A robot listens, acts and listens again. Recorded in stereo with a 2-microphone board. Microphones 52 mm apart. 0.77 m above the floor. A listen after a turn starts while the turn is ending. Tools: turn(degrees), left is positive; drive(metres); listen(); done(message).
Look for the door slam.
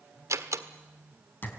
turn(degrees=-70)
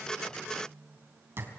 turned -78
listen()
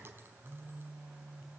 done("I heard a door slam, but can't make it out now. It was about 5° left or 30° right.")